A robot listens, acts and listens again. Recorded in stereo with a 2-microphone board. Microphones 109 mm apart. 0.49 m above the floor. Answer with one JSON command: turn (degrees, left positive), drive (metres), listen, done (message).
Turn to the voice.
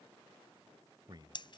{"turn": -45}
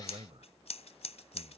{"turn": -85}
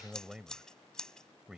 {"turn": -10}
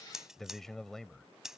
{"done": "Facing the man speaking."}